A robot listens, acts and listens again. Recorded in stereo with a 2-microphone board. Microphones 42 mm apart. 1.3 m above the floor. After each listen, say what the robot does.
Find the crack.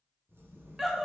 Turn 70° right.
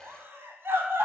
Keep listening.
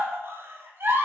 I heard a crack, but can't make it out now. It was about straight ahead or 40° right.